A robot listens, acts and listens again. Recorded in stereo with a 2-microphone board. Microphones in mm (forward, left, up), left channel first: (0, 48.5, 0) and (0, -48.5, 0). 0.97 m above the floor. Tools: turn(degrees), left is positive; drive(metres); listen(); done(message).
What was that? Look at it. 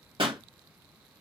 turn(degrees=-65)
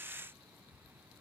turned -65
listen()
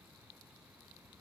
done("I heard a pop, but can't make it out now. It was about straight ahead or 50° right.")